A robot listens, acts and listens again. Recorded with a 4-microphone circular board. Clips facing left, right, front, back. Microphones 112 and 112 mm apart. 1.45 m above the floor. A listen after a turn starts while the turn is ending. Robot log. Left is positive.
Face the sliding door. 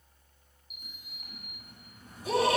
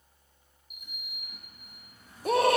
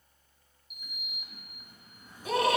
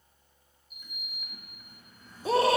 note: The sliding door: 75° left.
cmd yaw +75
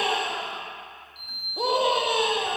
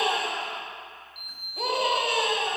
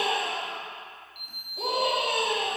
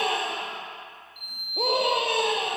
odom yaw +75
end: Found it: a sliding door, straight ahead, 1 to 2 m away.